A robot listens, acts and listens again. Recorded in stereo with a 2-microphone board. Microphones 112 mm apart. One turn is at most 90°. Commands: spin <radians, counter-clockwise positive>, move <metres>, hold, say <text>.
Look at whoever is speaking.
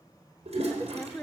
spin 0.35
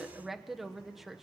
say Facing the woman speaking, 1 to 2 m away.